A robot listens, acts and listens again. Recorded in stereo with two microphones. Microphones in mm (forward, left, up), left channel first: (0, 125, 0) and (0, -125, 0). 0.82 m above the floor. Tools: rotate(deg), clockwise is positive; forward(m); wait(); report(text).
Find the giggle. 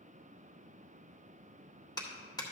wait()
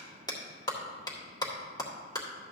wait()
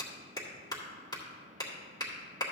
report("I can't make out a giggle to turn to.")